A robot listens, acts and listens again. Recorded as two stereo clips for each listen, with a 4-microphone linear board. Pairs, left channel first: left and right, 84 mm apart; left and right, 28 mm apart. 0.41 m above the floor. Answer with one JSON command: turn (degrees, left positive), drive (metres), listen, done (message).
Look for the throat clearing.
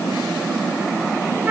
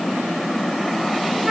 {"listen": true}
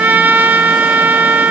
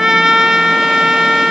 {"listen": true}
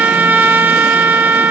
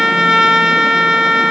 {"done": "I can't make out throat clearing, only a trumpet."}